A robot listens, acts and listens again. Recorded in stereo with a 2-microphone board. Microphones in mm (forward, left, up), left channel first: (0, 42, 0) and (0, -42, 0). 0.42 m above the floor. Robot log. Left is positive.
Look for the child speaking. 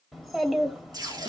cmd yaw +30
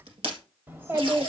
note: So it is at 30° right.
cmd yaw -30
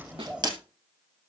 note: The child speaking is now 15° right.
cmd yaw -15
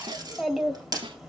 end: Found it: a child speaking, straight ahead.